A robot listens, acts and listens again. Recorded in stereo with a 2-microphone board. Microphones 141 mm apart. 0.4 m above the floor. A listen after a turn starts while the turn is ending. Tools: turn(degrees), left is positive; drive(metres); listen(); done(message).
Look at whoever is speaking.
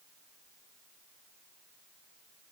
listen()
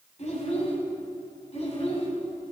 turn(degrees=45)
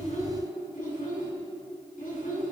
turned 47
turn(degrees=75)
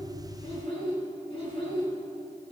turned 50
turn(degrees=45)
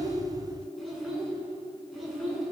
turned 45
done("Facing the child speaking, 2 to 4 m away.")